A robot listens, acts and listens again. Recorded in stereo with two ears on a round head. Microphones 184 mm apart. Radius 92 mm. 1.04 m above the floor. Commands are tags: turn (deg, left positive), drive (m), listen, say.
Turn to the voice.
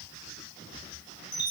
<listen/>
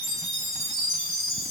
<listen/>
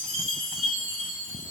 <say>I can't make out anyone speaking to turn to.</say>